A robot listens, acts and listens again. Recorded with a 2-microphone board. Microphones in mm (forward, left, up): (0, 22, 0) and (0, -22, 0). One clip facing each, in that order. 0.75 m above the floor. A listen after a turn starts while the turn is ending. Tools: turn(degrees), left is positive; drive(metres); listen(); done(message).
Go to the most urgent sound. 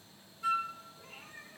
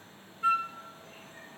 listen()
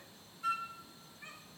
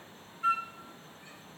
listen()
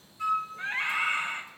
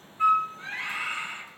turn(degrees=45)
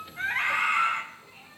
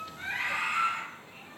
turn(degrees=90)
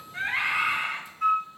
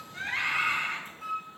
drive(metres=1.0)
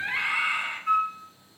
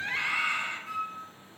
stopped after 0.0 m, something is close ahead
turn(degrees=15)
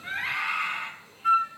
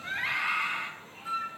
done("Something is in my way. I am facing the scream but have not reached it.")